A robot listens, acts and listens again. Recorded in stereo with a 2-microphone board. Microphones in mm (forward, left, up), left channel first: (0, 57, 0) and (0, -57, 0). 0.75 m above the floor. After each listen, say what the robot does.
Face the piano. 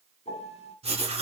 Turn 90° left.
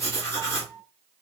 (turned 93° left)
Found it: a piano, straight ahead.